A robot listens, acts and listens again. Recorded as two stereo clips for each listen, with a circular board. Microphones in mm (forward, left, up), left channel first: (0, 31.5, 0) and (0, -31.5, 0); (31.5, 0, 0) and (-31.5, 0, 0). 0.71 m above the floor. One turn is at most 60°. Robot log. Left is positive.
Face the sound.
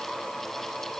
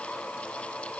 cmd idle
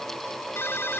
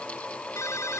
note: The ringtone: 40° left.
cmd yaw +40
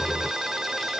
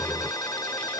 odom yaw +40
note: The ringtone is now 10° right.
cmd yaw -10
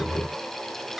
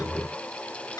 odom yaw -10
cmd idle
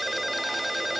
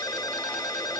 end: Found it: a ringtone, straight ahead.